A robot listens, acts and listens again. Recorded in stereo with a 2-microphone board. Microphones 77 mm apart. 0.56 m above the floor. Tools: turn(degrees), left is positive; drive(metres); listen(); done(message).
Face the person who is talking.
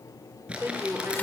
turn(degrees=-35)
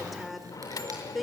done("Found it: a woman speaking, straight ahead.")